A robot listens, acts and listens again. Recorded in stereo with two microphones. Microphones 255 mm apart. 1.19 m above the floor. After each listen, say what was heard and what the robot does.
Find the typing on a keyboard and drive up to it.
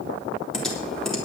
Turn 30° left.
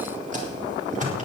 So it is at 30° right. Turn 30° right.
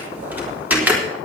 Drive 1.0 m forward.
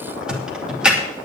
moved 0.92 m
Drive 1.0 m forward.
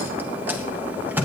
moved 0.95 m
The typing on a keyboard is now 10° right. Turn 10° right.
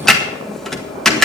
Drive 1.0 m forward.
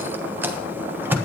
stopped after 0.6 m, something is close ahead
The typing on a keyboard is now 10° right. Turn 10° right.
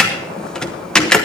I am next to the typing on a keyboard.